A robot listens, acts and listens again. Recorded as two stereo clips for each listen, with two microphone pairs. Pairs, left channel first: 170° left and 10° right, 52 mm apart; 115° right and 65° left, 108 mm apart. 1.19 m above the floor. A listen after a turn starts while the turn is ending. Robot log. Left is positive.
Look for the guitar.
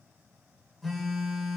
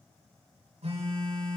cmd idle
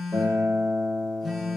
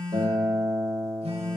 note: The guitar: 25° left.
cmd yaw +25
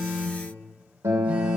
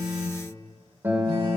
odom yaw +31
end: Facing the guitar, 2 to 4 m away.